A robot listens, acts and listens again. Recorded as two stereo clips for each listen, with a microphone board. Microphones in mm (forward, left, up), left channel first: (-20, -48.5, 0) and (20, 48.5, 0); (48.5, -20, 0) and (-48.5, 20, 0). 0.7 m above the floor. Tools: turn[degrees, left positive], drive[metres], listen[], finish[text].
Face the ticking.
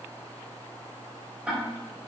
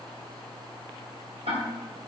Thought: The ticking: 145° left.
Action: turn[145]
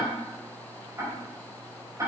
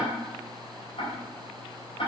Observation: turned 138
Thought: The ticking is now 10° left.
Action: turn[10]
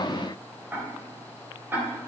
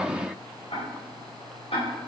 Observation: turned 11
Action: finish[Facing the ticking, 2 to 4 m away.]